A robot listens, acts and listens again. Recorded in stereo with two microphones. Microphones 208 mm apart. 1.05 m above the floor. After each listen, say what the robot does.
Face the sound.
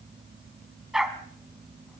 Turn 30° left.
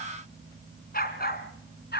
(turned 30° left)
Turn 125° left.
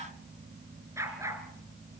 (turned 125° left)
Turn 15° right.
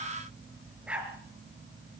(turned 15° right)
Found it: a dog barking, straight ahead.